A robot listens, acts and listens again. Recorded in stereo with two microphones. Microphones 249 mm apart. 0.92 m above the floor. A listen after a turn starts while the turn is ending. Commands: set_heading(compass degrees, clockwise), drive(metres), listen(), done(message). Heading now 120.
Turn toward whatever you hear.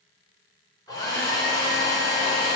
set_heading(105)
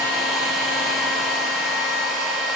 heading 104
done("Facing the hair dryer, 2 to 4 m away.")